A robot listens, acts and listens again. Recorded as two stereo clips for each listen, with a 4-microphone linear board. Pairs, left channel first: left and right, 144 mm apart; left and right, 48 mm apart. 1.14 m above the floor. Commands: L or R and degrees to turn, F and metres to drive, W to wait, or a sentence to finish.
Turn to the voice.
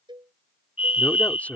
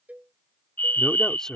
L30
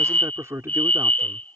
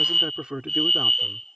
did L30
R20
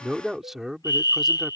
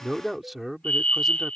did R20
Found it: a man speaking, straight ahead.